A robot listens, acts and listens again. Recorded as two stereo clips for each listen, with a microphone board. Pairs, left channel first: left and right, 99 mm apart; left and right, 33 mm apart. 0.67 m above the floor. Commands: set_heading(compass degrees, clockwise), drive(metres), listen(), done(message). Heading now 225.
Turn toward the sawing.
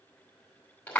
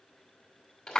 listen()
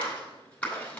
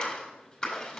listen()
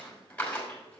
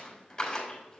done("I can't make out sawing, only a clap.")